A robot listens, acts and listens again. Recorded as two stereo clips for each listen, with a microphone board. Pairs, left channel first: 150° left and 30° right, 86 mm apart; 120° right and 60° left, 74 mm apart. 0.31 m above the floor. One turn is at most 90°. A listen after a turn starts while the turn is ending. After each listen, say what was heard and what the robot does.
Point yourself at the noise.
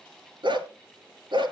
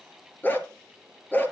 The dog barking: 55° right. Turn 55° right.
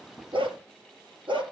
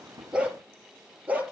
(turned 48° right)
The dog barking is now 10° right. Turn 10° right.
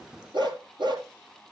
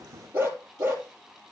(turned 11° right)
Facing the dog barking, 2 to 4 m away.